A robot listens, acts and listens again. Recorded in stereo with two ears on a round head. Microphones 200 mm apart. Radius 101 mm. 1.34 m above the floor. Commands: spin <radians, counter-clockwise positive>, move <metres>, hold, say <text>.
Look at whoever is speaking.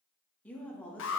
spin 0.52
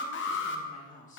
spin 2.53
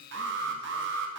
hold
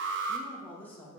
spin 0.17
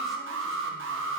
hold
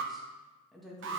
say Facing the woman speaking.